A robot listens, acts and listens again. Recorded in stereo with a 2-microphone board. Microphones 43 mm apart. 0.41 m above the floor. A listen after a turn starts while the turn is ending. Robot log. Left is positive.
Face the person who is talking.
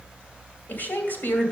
note: The woman speaking: about 45° left or 135° left.
cmd yaw +45
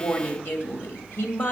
note: So it is at 75° left.
cmd yaw +75
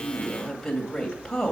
note: The woman speaking is now 15° left.
cmd yaw +15
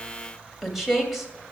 end: Facing the woman speaking.